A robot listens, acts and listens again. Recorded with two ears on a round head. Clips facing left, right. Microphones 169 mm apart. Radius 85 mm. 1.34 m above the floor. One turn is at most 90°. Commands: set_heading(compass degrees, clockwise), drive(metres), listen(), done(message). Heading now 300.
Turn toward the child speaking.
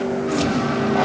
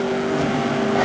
listen()
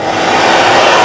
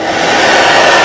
listen()
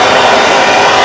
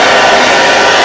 done("I can't make out a child speaking, only a hair dryer.")